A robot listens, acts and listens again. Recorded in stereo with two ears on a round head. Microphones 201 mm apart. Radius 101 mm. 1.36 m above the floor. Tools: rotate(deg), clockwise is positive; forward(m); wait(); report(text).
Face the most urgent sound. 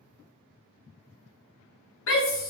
rotate(-60)
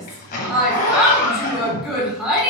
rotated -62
report("Facing the shout, 1 to 2 m away.")